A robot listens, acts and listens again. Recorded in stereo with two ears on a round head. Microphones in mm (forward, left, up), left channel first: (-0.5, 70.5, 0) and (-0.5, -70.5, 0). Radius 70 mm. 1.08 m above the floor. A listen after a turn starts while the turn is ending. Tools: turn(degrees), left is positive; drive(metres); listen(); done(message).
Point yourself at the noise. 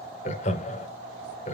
turn(degrees=45)
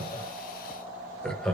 done("Facing the laughter, 1 to 2 m away.")